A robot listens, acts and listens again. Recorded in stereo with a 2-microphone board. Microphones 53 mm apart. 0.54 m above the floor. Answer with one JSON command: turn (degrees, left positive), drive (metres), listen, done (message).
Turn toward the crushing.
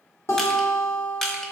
{"turn": 30}
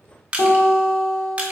{"turn": -20}
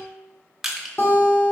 {"done": "Facing the crushing, under 1 m away."}